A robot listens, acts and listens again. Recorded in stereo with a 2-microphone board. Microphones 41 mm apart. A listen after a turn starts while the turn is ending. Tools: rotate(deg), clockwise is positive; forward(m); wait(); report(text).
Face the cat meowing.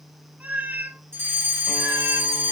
rotate(45)
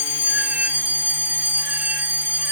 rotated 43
wait()
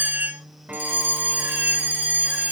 rotate(45)
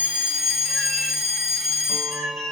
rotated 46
rotate(10)
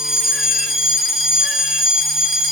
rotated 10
wait()
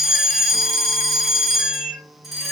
report("Facing the cat meowing, 2 to 4 m away.")